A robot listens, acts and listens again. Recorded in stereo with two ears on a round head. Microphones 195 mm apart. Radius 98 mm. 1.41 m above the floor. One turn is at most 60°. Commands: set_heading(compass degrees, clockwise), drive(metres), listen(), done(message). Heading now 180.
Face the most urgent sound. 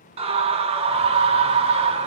set_heading(210)
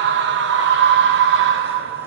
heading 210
set_heading(270)
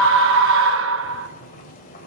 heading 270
set_heading(330)
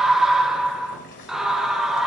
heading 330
done("Facing the scream.")